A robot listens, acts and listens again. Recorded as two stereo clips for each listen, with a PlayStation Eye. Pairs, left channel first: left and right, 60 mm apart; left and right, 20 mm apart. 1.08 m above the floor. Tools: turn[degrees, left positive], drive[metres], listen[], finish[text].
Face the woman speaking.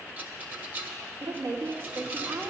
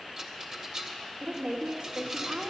Action: turn[-90]
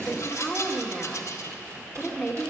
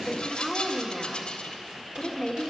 Action: finish[Found it: a woman speaking, straight ahead.]